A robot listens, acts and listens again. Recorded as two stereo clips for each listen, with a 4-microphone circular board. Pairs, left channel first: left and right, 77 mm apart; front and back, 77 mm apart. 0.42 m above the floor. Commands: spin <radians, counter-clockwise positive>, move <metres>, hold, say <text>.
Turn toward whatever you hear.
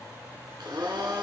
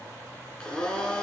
spin -1.31
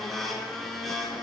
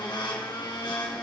say Facing the blender.